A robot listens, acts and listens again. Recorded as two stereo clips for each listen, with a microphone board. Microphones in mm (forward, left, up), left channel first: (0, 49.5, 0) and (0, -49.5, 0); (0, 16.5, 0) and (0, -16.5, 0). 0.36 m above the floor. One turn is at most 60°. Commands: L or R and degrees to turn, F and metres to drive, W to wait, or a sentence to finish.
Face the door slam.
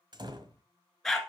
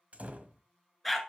R50
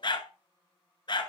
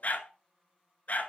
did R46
W
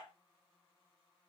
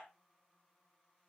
I heard a door slam, but can't make it out now. It was about straight ahead or 85° right.